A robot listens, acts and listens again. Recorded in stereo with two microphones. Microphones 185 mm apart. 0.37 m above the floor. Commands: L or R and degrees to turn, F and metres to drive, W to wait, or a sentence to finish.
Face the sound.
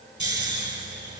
R70
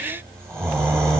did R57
R15
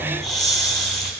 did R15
Facing the snoring.